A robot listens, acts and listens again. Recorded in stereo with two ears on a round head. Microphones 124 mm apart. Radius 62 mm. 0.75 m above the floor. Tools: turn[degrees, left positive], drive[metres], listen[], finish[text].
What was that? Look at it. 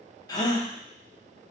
Thought: The gasp: about 30° left or 150° left.
Action: turn[30]
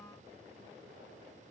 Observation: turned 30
Action: listen[]
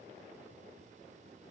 Action: finish[I heard a gasp, but can't make it out now. It was about straight ahead or 120° left.]